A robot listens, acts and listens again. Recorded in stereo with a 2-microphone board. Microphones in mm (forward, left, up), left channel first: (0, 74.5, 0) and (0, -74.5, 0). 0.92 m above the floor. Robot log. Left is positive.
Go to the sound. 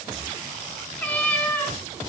cmd yaw +30
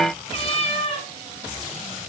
note: So it is at 135° left.
cmd yaw +135
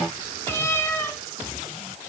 note: The cat meowing is now 15° left.
cmd yaw +15
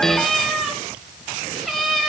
cmd fwd 1.0
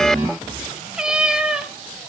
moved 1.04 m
cmd fwd 1.0
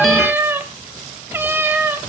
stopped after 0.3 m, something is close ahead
note: The cat meowing is now 15° right.
cmd yaw -15
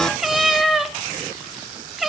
end: I am next to the cat meowing.